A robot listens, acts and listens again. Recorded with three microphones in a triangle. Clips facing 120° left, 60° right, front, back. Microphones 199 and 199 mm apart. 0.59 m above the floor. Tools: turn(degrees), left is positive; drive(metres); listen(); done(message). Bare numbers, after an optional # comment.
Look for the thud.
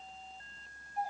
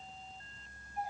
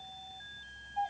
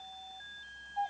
listen()
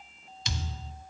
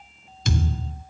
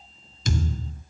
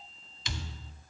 # The thud: 35° right.
turn(-35)
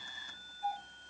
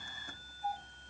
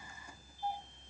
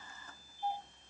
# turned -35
done("Facing where the thud came from. I can't hear it now.")